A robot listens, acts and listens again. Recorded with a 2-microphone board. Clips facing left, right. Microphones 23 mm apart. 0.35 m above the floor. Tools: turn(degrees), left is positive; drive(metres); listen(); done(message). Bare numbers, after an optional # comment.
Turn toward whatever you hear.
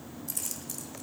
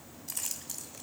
turn(-30)
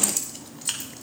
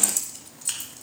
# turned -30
# So it is at 35° left.
turn(35)
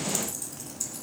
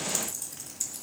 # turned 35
done("Found it: keys jangling, straight ahead.")